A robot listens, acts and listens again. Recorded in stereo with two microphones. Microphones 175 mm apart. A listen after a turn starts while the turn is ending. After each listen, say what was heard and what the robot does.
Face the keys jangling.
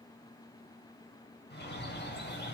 Keep listening.
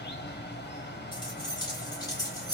The keys jangling: about 20° left or 160° left. Turn 20° left.
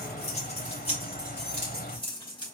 The keys jangling: about 30° left or 150° left. Turn 30° left.
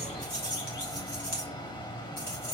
So it is at 125° left. Turn 125° left.
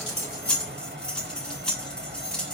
Found it: keys jangling, straight ahead.